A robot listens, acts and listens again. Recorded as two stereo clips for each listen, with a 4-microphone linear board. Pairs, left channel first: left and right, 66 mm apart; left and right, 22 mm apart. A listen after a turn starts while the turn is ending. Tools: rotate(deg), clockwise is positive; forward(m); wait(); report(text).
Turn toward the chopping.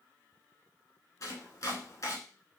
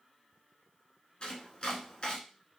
rotate(-55)
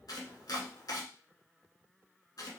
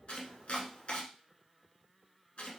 rotate(-70)
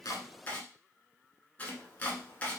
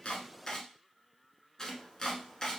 rotate(-25)
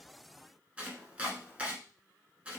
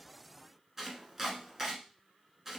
rotate(20)
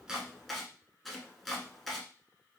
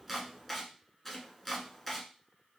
report("Facing the chopping.")